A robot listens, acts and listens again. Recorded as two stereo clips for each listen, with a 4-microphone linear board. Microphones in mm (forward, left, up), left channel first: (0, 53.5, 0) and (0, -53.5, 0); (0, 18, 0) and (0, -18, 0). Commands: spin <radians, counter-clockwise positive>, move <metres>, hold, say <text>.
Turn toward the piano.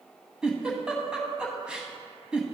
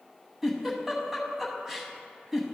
hold
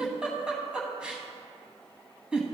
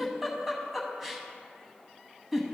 hold
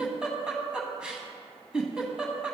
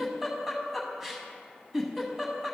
say I can't make out a piano, only a giggle.